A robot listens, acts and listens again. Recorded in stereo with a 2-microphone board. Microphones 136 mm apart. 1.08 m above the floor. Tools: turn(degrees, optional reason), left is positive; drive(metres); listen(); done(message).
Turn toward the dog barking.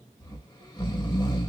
listen()
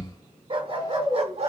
turn(degrees=-45, reason="The dog barking: about 45° right or 135° right.")
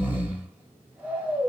listen()
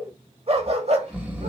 turn(degrees=-50, reason="The dog barking: about 50° right or 130° right.")
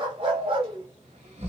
turn(degrees=-40, reason="So it is at 40° right.")
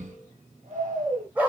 turn(degrees=-10, reason="The dog barking is now 10° right.")
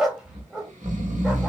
done("Found it: a dog barking, straight ahead, 1 to 2 m away.")